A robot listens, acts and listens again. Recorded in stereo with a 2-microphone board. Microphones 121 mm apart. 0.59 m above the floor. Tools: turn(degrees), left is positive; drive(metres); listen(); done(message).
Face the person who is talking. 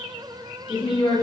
turn(degrees=40)
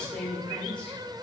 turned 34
turn(degrees=10)
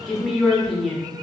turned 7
done("Facing the woman speaking, 1 to 2 m away.")